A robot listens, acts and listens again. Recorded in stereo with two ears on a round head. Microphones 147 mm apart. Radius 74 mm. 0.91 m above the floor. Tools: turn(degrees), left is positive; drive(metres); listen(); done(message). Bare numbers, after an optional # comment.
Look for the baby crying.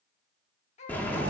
# The baby crying: about 40° left or 140° left.
turn(40)
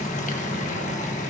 listen()
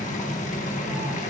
listen()
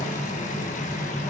done("I heard a baby crying, but can't make it out now. It was about straight ahead or 100° left.")